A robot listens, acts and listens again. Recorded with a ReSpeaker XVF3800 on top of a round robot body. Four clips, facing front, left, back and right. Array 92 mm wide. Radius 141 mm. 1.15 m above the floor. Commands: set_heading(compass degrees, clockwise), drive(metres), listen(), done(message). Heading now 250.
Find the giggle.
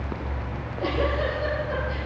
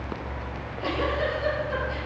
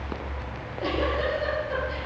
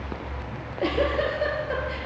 set_heading(340)
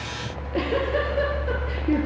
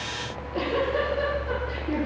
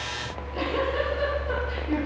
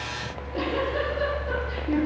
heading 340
done("Found it: a giggle, straight ahead, 2 to 4 m away.")